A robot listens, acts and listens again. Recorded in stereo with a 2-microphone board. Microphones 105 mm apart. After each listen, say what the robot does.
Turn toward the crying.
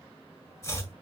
Keep listening.
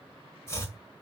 Keep listening.
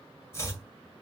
I can't make out crying, only chopping.